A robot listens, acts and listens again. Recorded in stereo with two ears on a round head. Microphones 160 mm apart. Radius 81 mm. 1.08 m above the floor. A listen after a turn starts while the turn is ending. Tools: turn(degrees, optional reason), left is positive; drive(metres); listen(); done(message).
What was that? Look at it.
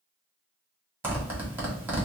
turn(degrees=-30)
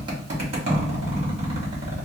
turn(degrees=-140, reason="So it is at 140° right.")
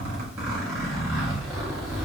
done("Facing the zipper, 1 to 2 m away.")